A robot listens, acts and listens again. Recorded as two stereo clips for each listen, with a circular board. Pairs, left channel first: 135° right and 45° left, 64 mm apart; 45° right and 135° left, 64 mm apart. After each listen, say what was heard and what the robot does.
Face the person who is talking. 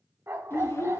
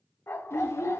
The child speaking: 85° right. Turn 85° right.
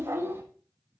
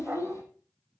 Found it: a child speaking, straight ahead.